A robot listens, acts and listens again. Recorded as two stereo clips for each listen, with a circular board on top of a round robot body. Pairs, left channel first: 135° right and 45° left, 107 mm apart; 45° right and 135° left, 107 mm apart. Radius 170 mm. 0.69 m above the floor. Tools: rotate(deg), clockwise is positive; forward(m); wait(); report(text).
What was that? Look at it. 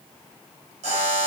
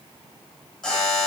rotate(-40)
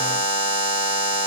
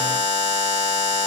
report("Facing the buzzer.")